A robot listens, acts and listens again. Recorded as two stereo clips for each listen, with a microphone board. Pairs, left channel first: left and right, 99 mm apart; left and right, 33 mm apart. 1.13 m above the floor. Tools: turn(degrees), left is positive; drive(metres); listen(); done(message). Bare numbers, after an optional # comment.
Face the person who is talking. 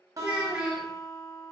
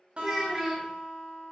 turn(-30)
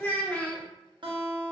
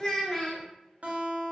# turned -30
# So it is at 15° left.
turn(15)
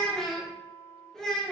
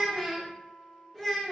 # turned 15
done("Found it: a child speaking, straight ahead.")